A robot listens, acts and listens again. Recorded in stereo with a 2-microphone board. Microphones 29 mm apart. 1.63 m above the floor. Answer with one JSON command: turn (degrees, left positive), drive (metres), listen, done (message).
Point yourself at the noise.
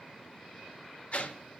{"turn": 45}
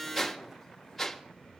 {"done": "Facing the whoosh."}